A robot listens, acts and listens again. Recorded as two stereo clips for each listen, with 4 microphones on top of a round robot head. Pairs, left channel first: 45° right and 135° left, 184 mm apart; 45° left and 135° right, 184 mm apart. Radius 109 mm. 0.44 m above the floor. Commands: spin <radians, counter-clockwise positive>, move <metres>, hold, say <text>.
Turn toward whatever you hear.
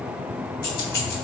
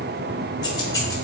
spin -0.44
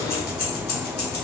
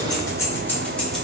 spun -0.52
spin -0.79
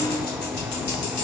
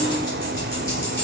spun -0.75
spin -0.52
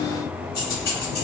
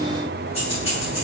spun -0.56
spin -0.26
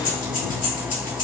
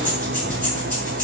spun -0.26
say Found it: keys jangling, straight ahead.